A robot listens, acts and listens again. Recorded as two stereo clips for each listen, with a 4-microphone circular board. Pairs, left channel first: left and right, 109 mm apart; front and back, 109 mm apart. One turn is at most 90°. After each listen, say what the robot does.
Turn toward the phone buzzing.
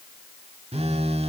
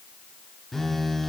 Turn 85° right.
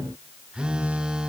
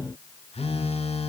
Turn 10° right.
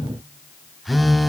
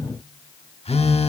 Facing the phone buzzing, 1 to 2 m away.